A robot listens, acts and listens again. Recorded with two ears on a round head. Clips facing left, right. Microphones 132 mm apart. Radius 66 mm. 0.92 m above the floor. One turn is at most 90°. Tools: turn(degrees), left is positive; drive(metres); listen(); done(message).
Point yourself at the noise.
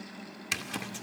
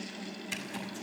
turn(degrees=90)
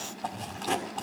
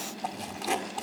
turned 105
turn(degrees=-10)
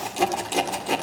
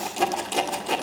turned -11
done("Facing the zipper, 2 to 4 m away.")